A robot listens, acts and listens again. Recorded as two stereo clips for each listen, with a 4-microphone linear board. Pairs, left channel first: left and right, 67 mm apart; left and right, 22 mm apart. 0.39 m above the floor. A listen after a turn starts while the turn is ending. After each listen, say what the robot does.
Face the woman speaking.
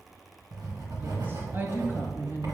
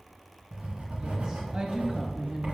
Turn 45° right.
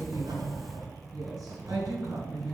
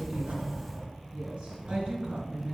Turn 65° right.
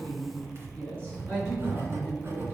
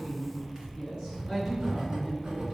Turn 30° right.
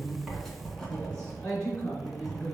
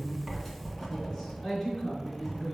Turn 15° left.
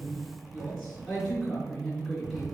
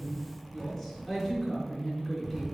Found it: a woman speaking, straight ahead, over 4 m away.